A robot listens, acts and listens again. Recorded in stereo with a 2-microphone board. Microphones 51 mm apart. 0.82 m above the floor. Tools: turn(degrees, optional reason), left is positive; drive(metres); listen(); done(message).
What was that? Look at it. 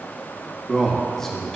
turn(degrees=30)
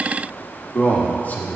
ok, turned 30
turn(degrees=135, reason="So it is at 135° left.")
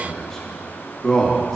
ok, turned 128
turn(degrees=10, reason="The man speaking is now 10° left.")
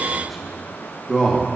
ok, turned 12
done("Found it: a man speaking, straight ahead, 1 to 2 m away.")